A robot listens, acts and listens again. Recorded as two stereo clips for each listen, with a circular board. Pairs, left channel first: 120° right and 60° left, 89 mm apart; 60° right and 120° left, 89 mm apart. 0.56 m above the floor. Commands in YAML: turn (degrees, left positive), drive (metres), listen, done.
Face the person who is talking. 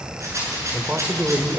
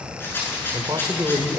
turn: 125
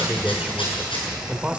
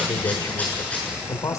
turn: -15
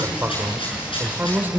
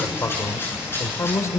done: "Facing the man speaking."